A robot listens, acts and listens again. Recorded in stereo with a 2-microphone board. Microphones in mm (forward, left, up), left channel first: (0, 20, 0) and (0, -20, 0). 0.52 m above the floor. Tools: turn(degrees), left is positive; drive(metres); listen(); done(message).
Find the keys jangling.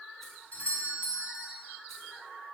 listen()
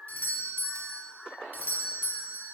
listen()
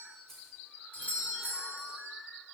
turn(degrees=30)
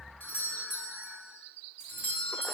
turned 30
listen()
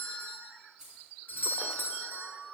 turn(degrees=-15)
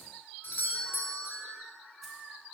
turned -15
listen()
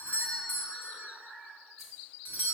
listen()
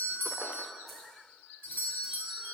done("I heard keys jangling from this way, but can't make it out now.")